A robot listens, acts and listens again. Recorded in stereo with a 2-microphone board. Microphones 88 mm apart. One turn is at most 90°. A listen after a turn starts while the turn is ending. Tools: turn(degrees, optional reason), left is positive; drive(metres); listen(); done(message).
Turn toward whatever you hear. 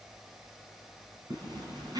turn(degrees=-45, reason="The zipper: about 45° right or 135° right.")
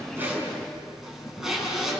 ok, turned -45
done("Facing the zipper.")